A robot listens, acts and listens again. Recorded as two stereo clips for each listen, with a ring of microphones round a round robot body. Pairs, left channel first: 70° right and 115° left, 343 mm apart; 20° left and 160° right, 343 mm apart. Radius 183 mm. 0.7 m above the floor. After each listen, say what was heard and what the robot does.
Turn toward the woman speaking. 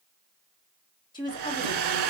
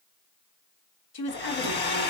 The woman speaking: 10° left. Turn 10° left.
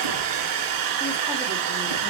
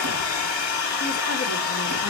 Keep listening.
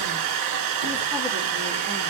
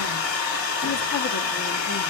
Keep listening.
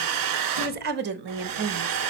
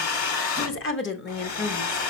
The woman speaking is now 70° left. Turn 70° left.
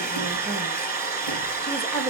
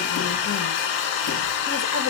Keep listening.
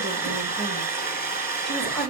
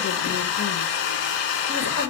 Keep listening.
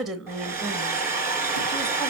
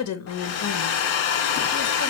The woman speaking is now 25° left. Turn 25° left.
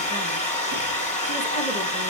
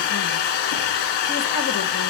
Keep listening.
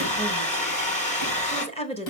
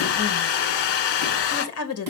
Found it: a woman speaking, straight ahead, 1 to 2 m away.